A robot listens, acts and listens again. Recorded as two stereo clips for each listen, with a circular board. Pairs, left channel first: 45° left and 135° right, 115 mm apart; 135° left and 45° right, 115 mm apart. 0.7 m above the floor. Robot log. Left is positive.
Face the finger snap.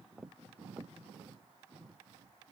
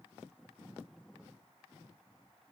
cmd idle
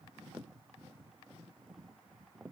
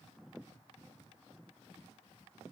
cmd idle
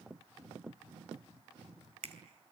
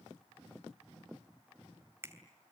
note: The finger snap: 115° right.
cmd yaw -115
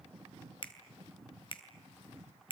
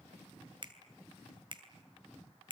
end: Found it: a finger snap, straight ahead, 2 to 4 m away.